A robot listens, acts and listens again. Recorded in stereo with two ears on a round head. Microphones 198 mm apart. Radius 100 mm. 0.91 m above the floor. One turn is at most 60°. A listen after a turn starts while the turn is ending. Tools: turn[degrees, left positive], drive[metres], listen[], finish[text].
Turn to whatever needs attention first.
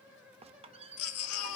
Thought: The baby crying: about 70° left or 110° left.
Action: turn[60]
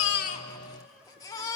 Thought: So it is at 15° left.
Action: turn[15]
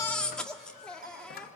Action: finish[Facing the baby crying.]